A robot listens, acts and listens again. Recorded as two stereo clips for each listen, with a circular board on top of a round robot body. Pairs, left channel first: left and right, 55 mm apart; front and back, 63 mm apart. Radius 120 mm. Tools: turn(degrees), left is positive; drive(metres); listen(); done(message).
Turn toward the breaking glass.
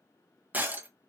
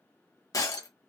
turn(degrees=-30)
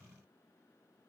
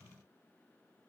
done("I heard breaking glass from this way, but can't make it out now.")